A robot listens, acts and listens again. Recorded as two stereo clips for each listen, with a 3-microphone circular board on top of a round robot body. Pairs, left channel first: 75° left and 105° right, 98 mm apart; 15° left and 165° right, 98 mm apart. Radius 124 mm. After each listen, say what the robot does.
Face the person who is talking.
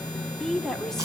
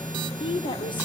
Turn 10° right.
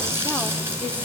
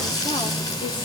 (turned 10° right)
Keep listening.
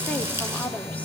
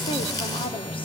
Found it: a woman speaking, straight ahead, 2 to 4 m away.